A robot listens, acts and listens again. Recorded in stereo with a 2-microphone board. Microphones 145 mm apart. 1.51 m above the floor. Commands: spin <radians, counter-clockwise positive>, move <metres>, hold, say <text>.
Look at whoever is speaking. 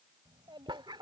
spin -0.52
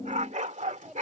say Facing the child speaking.